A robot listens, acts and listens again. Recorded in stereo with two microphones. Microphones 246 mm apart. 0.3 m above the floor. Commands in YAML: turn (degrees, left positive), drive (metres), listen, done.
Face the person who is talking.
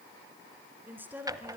turn: -30
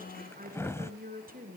turn: -145
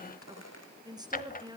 turn: -15
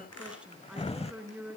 done: "Facing the woman speaking."